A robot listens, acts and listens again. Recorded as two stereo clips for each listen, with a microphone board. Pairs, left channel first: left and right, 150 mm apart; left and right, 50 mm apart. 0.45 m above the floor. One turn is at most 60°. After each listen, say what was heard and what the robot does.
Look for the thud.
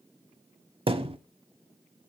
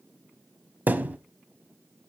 The thud: about 35° right or 145° right. Turn 35° right.
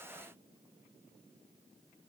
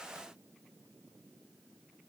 Keep listening.
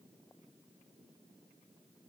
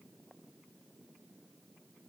I heard a thud, but can't make it out now. It was about straight ahead or 110° right.